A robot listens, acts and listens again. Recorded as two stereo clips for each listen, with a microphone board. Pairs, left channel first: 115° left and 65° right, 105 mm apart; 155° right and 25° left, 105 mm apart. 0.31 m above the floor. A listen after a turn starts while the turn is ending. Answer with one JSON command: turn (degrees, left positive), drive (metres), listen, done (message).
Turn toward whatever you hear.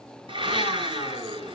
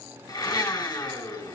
{"turn": -105}
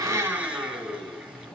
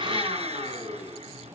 {"turn": 15}
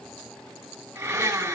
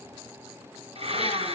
{"done": "Facing the blender, over 4 m away."}